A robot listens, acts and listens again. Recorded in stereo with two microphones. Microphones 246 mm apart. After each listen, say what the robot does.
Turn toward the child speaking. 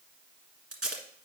Keep listening.
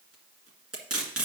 Keep listening.
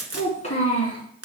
Turn 25° left.
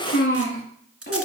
Turn 40° left.
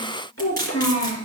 Turn 110° left.
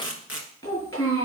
Turn 10° left.
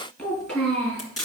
Facing the child speaking, over 4 m away.